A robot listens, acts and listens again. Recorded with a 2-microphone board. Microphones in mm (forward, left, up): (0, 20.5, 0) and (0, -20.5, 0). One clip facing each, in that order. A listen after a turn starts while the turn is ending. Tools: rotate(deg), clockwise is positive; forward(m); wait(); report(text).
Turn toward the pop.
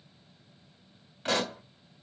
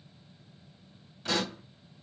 rotate(-40)
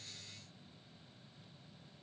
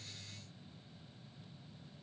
wait()
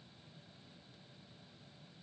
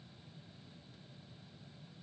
report("I heard a pop, but can't make it out now. It was about straight ahead or 100° left.")